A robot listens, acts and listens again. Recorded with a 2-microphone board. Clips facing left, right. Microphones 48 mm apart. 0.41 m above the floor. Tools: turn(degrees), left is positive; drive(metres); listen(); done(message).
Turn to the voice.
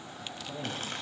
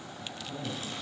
turn(degrees=65)
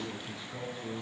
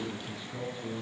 done("Found it: a man speaking, straight ahead.")